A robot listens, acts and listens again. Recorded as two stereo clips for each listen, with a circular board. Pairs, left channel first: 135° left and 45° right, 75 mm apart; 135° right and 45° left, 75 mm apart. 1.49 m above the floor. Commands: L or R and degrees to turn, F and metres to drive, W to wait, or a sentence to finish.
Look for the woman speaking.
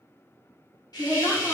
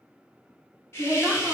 L105
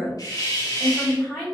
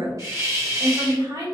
L35
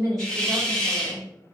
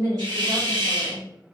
Facing the woman speaking, 2 to 4 m away.